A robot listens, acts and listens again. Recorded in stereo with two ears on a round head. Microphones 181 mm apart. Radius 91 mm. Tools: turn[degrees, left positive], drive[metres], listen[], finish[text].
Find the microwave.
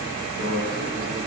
Action: turn[-90]
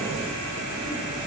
Action: listen[]
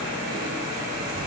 Action: listen[]
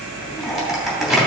Action: finish[Facing the microwave.]